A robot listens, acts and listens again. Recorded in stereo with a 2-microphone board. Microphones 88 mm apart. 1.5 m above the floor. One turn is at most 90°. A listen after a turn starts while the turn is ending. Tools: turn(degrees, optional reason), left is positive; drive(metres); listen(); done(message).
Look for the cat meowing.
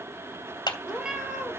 turn(degrees=-30)
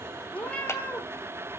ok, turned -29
turn(degrees=15, reason="So it is at 15° left.")
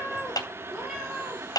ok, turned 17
done("Found it: a cat meowing, straight ahead, over 4 m away.")